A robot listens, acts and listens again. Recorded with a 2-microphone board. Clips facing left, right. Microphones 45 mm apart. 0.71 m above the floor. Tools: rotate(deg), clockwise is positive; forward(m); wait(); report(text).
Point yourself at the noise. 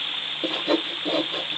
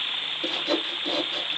rotate(-20)
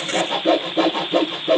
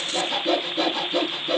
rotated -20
rotate(-140)
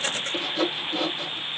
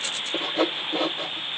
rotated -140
rotate(30)
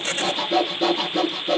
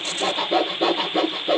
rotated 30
rotate(20)
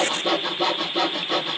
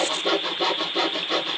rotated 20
report("Facing the sawing, 1 to 2 m away.")